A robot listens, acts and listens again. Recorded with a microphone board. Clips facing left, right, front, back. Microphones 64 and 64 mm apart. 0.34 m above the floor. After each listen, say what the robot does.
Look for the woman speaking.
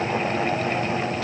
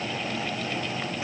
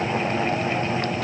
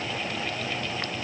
Keep listening.
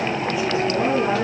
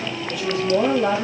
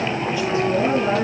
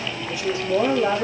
Turn 115° right.
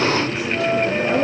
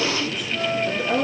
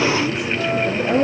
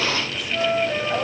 Turn 15° left.
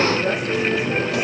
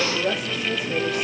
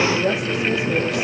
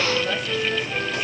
Found it: a woman speaking, straight ahead.